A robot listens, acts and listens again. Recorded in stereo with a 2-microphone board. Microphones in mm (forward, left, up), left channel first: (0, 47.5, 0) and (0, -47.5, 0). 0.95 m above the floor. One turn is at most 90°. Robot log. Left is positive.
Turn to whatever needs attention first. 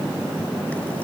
cmd idle
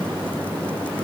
cmd idle
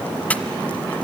end: I can't make out anything urgent to turn to.